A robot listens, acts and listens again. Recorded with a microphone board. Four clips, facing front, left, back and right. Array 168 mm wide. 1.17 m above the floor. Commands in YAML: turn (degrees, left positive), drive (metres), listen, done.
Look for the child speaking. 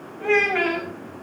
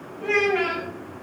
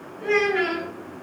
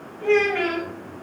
done: "Found it: a child speaking, straight ahead, over 4 m away."